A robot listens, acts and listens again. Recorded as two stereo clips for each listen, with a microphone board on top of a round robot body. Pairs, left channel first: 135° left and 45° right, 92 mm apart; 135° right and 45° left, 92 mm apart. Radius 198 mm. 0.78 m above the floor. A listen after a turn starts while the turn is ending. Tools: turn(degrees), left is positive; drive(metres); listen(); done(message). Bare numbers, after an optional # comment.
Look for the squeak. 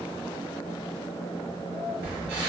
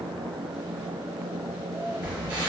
# The squeak: 15° right.
turn(-15)
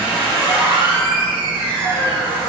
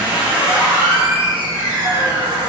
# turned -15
done("Found it: a squeak, straight ahead.")